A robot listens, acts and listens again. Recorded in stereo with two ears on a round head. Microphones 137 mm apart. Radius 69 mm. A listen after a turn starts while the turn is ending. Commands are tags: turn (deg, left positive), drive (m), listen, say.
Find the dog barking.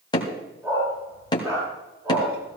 <turn deg="-20"/>
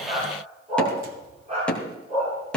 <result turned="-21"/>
<turn deg="-135"/>
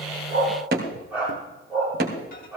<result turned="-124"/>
<say>Facing the dog barking, over 4 m away.</say>